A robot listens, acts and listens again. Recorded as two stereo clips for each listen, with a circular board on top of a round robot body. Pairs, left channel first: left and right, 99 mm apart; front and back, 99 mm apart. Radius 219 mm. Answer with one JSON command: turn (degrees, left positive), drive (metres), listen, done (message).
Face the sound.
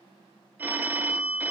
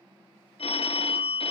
{"turn": -20}
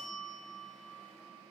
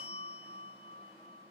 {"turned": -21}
{"done": "Facing the phone ringing, 1 to 2 m away."}